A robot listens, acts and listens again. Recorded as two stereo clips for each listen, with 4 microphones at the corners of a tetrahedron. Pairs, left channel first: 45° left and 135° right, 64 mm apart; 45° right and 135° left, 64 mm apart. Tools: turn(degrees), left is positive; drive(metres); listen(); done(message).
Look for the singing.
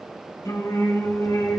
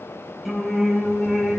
turn(degrees=55)
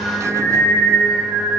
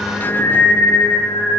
done("Found it: singing, straight ahead, 2 to 4 m away.")